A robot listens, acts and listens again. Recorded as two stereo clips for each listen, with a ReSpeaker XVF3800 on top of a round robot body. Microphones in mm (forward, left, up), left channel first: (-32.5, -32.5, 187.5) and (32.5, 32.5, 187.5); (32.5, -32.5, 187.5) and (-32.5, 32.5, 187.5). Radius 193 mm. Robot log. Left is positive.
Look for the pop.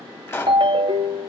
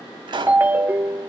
note: The pop: 160° left.
cmd yaw +160
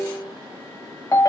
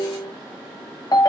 end: I heard a pop from this way, but can't make it out now.